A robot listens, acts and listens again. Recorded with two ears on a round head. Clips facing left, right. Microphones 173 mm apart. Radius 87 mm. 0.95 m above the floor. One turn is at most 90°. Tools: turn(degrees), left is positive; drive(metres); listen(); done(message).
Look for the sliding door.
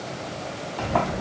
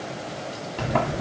turn(degrees=-25)
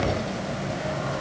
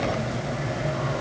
turn(degrees=-90)
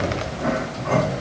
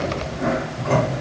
turn(degrees=-55)
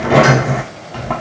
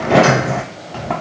done("Found it: a sliding door, straight ahead.")